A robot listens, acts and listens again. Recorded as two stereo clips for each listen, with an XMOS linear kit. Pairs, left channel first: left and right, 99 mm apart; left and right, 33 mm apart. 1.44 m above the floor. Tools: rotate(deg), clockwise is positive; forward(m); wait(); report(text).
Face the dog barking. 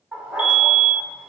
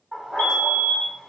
rotate(30)
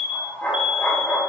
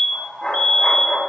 rotate(-20)
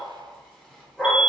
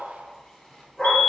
rotate(-10)
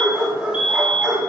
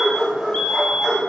report("Facing the dog barking.")